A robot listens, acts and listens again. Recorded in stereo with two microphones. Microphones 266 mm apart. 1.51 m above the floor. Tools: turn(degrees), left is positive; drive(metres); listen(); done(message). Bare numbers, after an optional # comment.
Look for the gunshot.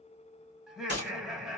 # The gunshot: about 40° right or 140° right.
turn(-40)
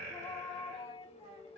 listen()
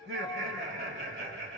done("I heard a gunshot, but can't make it out now. It was about straight ahead or 100° right.")